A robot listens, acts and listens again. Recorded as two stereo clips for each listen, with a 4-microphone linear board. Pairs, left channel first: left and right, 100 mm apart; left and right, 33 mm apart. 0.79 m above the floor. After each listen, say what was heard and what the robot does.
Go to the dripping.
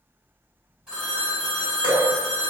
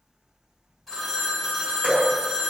The dripping: about 55° right or 125° right. Turn 55° right.
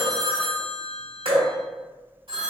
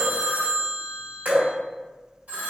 So it is at 70° right. Turn 70° right.
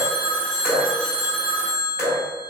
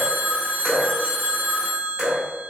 Drive 1.0 m forward.
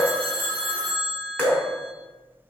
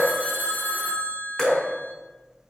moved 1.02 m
The dripping is now 20° left. Turn 20° left.
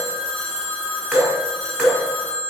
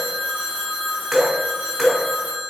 Drive 1.0 m forward.
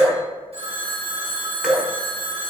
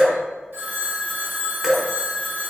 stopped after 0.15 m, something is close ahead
The dripping is now 10° right. Turn 10° right.
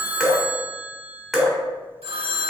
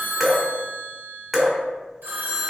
I am next to the dripping.